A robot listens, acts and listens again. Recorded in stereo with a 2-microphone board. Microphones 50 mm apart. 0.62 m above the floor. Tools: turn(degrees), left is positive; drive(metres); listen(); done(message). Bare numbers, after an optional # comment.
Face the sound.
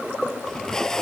turn(30)
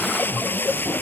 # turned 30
# So it is at 135° left.
turn(135)
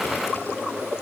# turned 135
listen()
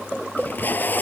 # The tape being pulled is now 40° left.
turn(40)
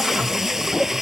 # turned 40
# The tape being pulled is now 10° right.
turn(-10)
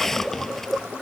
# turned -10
done("Found it: tape being pulled, straight ahead.")